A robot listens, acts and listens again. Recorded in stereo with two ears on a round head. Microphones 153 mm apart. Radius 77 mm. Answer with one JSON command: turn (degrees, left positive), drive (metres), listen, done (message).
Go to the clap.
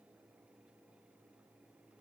{"listen": true}
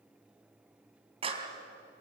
{"turn": -35}
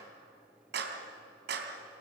{"turn": -110}
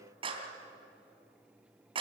{"turn": -30}
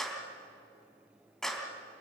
{"drive": 1.0}
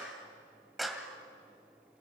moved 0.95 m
{"drive": 1.0}
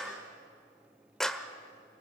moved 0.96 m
{"drive": 1.0}
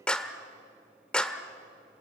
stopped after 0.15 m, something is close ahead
{"done": "Arrived at the clap, straight ahead."}